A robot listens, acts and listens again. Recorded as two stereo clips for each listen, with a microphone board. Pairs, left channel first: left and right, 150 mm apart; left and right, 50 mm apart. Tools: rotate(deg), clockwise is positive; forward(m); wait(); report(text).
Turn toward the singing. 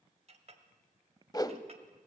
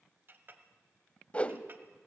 wait()
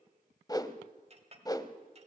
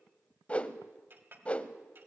wait()
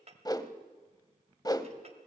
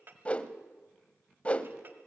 report("I can't make out singing, only a whoosh and a clink.")